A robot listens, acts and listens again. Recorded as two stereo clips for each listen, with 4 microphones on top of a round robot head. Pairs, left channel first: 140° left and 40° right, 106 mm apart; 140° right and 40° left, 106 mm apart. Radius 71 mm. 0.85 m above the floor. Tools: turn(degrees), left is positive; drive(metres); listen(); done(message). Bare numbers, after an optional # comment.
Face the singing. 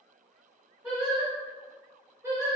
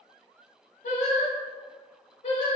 # The singing: 105° right.
turn(-105)
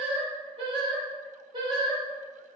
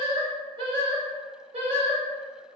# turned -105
# The singing is now 10° left.
turn(10)
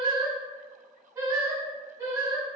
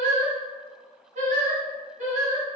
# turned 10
# The singing is now 20° left.
turn(20)
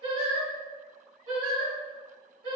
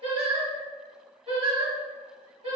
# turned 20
done("Facing the singing.")